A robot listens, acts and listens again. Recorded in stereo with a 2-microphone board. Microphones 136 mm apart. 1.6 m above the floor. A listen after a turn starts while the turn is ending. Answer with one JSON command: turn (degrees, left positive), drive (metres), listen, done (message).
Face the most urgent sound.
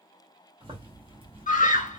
{"turn": 75}
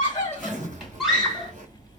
{"done": "Facing the scream."}